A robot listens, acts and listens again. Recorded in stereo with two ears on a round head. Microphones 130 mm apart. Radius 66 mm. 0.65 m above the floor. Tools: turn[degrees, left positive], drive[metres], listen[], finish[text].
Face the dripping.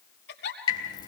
Thought: The dripping: about 30° left or 150° left.
Action: turn[30]
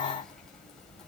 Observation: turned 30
Action: finish[Found it: dripping, straight ahead.]